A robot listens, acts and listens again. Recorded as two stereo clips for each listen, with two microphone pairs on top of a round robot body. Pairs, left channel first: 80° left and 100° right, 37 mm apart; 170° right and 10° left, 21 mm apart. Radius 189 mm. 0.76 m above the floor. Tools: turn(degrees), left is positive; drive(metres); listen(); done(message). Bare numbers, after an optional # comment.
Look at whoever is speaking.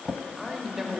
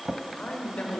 # The man speaking: 175° right.
turn(-175)
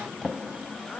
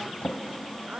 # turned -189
# Nothing new. It was at 10° left.
turn(10)
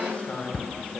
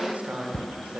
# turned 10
# The man speaking is now 20° left.
turn(20)
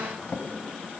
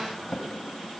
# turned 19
listen()
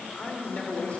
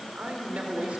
# The man speaking is now 20° left.
turn(20)
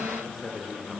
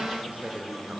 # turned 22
done("Found it: a man speaking, straight ahead.")